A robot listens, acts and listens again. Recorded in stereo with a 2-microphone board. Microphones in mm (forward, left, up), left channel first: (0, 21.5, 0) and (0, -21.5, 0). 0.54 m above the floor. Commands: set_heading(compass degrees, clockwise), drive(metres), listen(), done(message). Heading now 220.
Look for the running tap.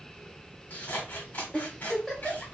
listen()
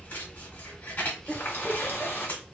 set_heading(165)
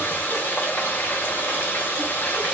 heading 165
set_heading(110)
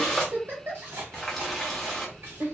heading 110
done("Found it: a running tap, straight ahead, under 1 m away.")